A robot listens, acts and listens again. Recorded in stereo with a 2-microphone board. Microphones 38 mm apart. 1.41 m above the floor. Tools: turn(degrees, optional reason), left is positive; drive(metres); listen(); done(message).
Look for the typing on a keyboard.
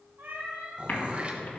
turn(degrees=55, reason="The typing on a keyboard: about 55° left or 125° left.")
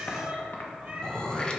turn(degrees=65, reason="So it is at 65° left.")
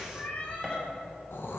listen()
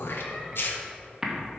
turn(degrees=-15, reason="The typing on a keyboard is now 15° right.")
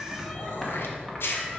done("Found it: typing on a keyboard, straight ahead.")